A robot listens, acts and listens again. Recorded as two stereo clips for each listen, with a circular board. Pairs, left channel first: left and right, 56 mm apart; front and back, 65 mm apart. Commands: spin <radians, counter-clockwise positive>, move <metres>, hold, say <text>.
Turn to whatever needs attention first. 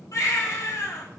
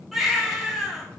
spin 1.57
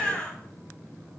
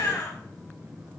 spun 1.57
spin 0.44
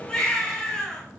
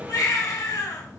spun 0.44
spin 0.26
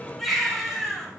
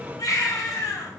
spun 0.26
say Found it: a baby crying, straight ahead, 2 to 4 m away.